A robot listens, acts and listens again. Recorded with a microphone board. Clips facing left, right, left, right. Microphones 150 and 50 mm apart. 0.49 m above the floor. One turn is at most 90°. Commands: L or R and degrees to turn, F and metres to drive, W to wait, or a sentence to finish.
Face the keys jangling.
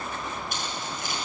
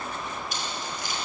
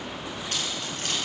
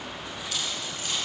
L55
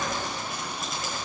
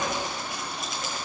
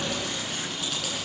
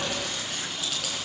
W
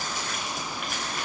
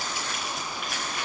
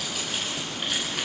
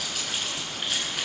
Facing the keys jangling, over 4 m away.